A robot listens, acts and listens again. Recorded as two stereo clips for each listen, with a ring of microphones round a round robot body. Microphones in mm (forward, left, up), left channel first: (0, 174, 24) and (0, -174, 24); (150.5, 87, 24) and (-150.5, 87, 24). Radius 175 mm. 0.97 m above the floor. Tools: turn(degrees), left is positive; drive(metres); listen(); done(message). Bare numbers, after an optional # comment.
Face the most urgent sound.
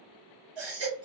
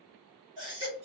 # The baby crying: 105° right.
turn(-105)
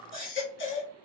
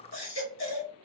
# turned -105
# The baby crying is now 35° left.
turn(35)
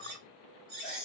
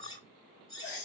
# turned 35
done("Found it: a baby crying, straight ahead, 1 to 2 m away.")